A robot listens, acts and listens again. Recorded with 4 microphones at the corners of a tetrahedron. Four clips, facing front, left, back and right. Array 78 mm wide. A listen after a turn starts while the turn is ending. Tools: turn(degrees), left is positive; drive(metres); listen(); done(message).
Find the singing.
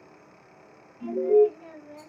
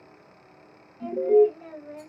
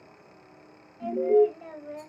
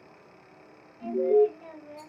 turn(degrees=160)
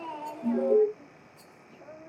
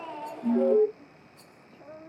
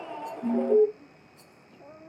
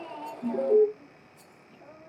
turn(degrees=30)
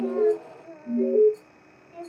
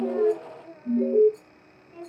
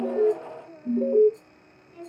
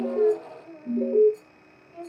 turn(degrees=10)
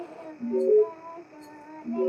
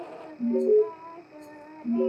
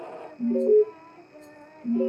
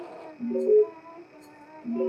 done("Found it: singing, straight ahead.")